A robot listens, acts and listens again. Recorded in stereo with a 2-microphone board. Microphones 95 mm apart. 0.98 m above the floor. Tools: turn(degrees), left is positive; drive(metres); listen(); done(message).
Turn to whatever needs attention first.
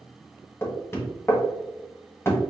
listen()
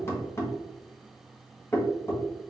listen()
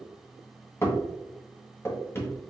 done("I can't make out anything urgent to turn to.")